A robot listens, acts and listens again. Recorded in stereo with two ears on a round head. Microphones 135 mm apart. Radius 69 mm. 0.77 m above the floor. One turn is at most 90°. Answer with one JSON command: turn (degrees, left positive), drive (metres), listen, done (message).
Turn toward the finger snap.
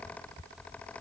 {"listen": true}
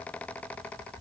{"listen": true}
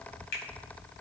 {"turn": 70}
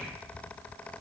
{"listen": true}
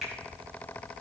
{"done": "Facing the finger snap, over 4 m away."}